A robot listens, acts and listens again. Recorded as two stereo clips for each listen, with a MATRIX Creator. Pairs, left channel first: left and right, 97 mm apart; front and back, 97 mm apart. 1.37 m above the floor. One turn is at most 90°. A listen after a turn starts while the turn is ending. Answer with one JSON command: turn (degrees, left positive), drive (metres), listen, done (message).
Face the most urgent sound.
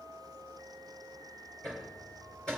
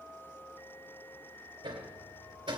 {"listen": true}
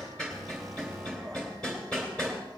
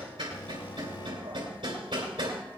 {"done": "Found it: an alarm, straight ahead."}